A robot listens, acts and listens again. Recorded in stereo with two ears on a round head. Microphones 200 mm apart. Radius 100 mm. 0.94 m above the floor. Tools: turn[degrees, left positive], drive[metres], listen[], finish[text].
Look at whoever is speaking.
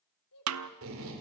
Action: turn[90]
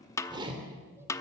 Action: listen[]
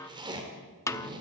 Action: listen[]
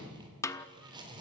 Action: finish[Facing where the child speaking came from. I can't hear it now.]